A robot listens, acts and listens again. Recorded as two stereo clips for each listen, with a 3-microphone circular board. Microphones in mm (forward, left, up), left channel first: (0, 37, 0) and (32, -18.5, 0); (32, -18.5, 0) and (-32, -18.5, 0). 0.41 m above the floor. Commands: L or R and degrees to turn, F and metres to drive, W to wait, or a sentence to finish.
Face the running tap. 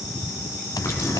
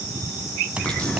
L75
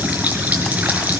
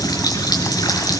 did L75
Facing the running tap, over 4 m away.